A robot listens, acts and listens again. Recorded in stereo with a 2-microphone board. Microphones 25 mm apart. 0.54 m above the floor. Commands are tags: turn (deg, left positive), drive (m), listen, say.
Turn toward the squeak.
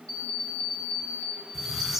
<turn deg="30"/>
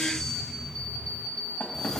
<turn deg="150"/>
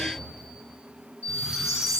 <turn deg="-30"/>
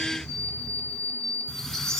<turn deg="15"/>
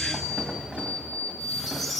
<say>Facing the squeak, 1 to 2 m away.</say>